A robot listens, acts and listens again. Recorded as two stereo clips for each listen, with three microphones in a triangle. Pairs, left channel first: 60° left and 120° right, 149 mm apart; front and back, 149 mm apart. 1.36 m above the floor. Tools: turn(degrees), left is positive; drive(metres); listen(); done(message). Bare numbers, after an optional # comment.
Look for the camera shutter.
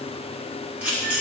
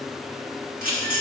# The camera shutter: 160° left.
turn(160)
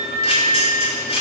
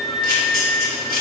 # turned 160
# The camera shutter is now 10° left.
turn(10)
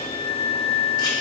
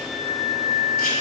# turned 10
listen()
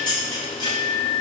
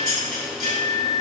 done("Facing the camera shutter.")